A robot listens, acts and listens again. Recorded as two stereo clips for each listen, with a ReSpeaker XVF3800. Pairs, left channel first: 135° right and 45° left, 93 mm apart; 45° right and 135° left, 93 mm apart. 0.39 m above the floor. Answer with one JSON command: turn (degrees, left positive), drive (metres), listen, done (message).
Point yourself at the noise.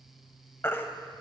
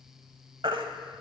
{"turn": 160}
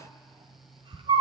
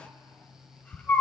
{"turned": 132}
{"turn": 30}
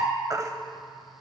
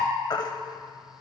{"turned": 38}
{"done": "Facing the baby crying, under 1 m away."}